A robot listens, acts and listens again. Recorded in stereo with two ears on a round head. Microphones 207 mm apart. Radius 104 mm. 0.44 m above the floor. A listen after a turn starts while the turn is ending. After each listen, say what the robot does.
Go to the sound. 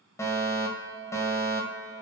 Turn 30° left.
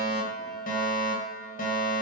Turn 135° left.
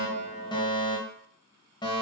Turn 20° left.
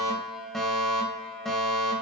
Drive 1.0 m forward.
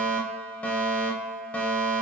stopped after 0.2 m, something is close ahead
Something is in my way. I am facing the fire alarm but have not reached it.